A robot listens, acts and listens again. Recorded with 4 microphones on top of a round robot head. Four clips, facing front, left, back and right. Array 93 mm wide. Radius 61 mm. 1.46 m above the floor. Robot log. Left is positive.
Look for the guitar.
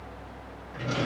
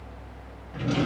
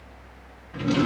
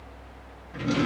cmd idle
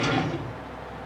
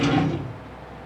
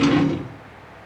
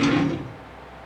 cmd idle
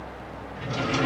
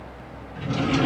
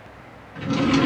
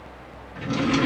end: I can't make out a guitar, only a drawer.